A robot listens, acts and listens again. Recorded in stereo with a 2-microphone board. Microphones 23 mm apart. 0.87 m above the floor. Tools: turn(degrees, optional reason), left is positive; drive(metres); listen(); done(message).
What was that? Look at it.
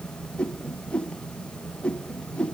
turn(degrees=60, reason="The whoosh: about 60° left or 120° left.")
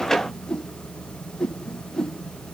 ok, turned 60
turn(degrees=35, reason="So it is at 35° left.")
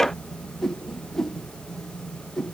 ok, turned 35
turn(degrees=15, reason="The whoosh is now 15° left.")
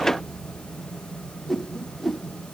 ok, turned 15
done("Found it: a whoosh, straight ahead, 1 to 2 m away.")